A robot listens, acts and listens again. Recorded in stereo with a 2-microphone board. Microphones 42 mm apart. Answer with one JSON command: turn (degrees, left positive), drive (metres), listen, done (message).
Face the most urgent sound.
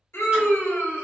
{"turn": 90}
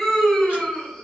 {"turn": 10}
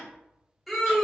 {"done": "Facing the scream."}